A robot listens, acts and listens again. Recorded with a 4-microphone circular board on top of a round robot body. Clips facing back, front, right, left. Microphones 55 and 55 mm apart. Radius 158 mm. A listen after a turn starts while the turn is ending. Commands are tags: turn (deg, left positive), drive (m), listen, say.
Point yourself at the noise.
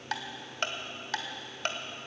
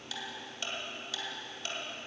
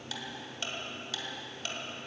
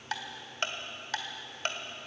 <turn deg="140"/>
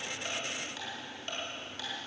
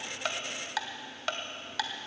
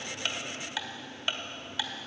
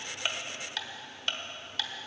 <turn deg="-10"/>
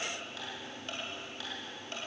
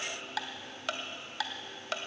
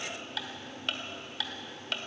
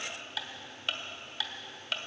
<say>Found it: ticking, straight ahead.</say>